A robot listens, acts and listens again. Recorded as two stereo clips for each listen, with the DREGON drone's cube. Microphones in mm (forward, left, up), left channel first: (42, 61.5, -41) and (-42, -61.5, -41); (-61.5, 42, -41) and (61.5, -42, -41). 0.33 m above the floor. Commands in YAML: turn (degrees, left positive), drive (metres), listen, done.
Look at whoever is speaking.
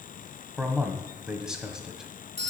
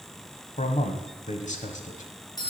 turn: 150
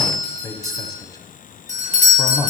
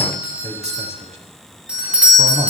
done: "Facing the man speaking, 1 to 2 m away."